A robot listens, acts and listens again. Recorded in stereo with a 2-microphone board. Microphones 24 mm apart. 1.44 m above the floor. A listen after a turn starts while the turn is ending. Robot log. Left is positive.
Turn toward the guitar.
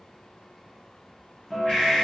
note: The guitar: about 25° left or 155° left.
cmd yaw +25
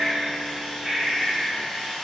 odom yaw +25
cmd idle
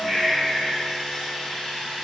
cmd idle
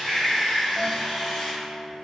note: So it is at 125° left.
cmd yaw +125
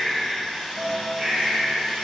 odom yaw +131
note: The guitar is now 10° right.
cmd yaw -10
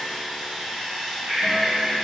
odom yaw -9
cmd idle
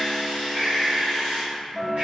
end: Found it: a guitar, straight ahead, under 1 m away.